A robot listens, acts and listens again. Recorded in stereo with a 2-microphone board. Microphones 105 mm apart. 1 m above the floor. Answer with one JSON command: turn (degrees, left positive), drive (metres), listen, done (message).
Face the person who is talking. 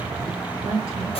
{"turn": -70}
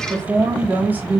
{"turn": -15}
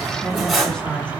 {"turn": 10}
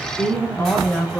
{"turn": 20}
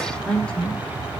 {"turn": 10}
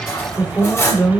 {"done": "Found it: a woman speaking, straight ahead, 2 to 4 m away."}